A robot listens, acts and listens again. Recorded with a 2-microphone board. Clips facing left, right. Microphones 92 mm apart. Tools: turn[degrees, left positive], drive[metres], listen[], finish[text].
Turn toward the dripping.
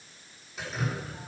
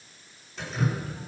Action: turn[30]
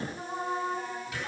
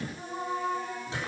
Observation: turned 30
Thought: So it is at 30° right.
Action: turn[-30]
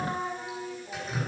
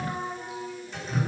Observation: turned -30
Action: finish[Found it: dripping, straight ahead.]